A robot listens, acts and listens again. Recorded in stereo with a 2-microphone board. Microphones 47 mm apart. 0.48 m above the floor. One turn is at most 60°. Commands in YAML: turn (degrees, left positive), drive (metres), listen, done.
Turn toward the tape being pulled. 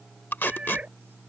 turn: 55
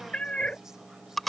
done: "Found it: tape being pulled, straight ahead."